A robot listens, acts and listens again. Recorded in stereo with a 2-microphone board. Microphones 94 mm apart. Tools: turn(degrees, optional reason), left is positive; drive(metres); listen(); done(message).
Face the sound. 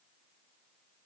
listen()
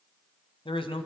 turn(degrees=65, reason="The man speaking: about 65° left or 115° left.")
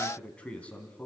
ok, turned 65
turn(degrees=15, reason="So it is at 15° left.")
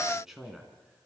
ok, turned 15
done("Facing the man speaking, 2 to 4 m away.")